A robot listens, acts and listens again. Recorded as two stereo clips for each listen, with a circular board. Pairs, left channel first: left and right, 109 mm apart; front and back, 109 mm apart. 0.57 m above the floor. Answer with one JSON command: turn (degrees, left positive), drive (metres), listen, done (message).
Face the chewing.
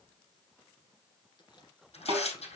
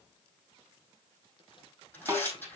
{"turn": 45}
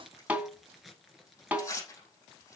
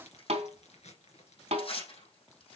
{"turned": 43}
{"done": "Facing the chewing, 2 to 4 m away."}